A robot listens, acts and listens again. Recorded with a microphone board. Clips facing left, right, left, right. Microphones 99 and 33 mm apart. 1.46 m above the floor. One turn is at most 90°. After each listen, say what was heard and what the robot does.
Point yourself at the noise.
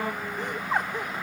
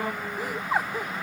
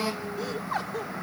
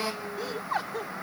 Turn 30° right.
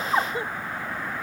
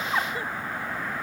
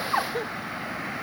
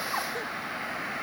So it is at 25° left. Turn 25° left.
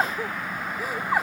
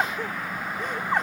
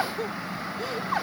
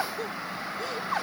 Found it: laughter, straight ahead.